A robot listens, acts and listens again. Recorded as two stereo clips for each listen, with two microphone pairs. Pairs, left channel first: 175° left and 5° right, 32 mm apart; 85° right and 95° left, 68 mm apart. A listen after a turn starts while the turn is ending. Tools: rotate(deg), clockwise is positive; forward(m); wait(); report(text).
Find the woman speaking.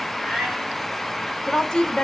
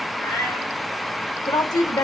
rotate(115)
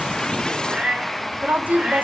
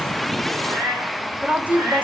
rotate(-25)
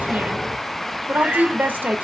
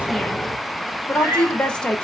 rotate(10)
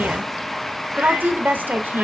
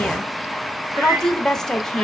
report("Found it: a woman speaking, straight ahead.")